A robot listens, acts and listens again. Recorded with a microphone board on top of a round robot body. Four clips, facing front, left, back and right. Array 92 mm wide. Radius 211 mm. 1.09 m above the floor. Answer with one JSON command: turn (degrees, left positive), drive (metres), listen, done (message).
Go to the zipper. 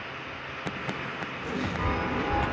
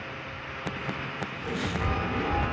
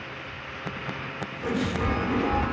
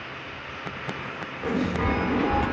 {"turn": -110}
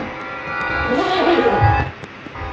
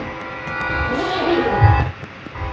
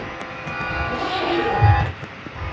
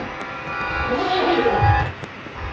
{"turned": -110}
{"drive": 1.0}
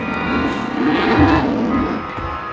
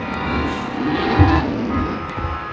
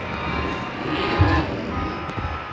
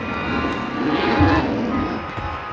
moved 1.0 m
{"drive": 1.0}
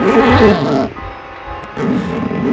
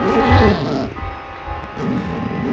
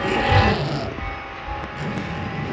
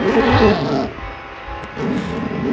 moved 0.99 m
{"drive": 1.0}
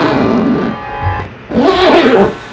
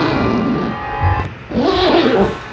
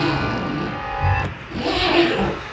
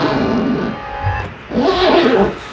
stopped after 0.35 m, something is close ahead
{"done": "Arrived at the zipper, straight ahead."}